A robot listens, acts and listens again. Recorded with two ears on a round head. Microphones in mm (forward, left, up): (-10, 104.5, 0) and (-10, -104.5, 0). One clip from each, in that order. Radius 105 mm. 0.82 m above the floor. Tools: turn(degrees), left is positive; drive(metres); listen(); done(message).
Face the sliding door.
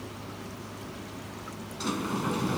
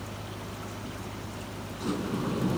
turn(degrees=65)
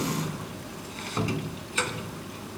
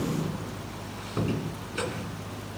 turn(degrees=55)
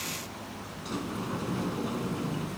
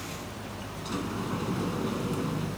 done("Facing the sliding door.")